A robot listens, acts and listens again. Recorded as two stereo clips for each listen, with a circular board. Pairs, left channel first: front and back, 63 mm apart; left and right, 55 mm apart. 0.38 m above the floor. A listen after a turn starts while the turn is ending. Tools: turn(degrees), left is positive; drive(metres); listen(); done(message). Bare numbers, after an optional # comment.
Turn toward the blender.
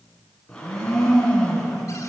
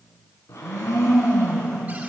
# The blender: 75° left.
turn(75)
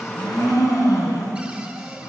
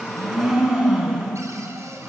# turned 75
done("Found it: a blender, straight ahead, over 4 m away.")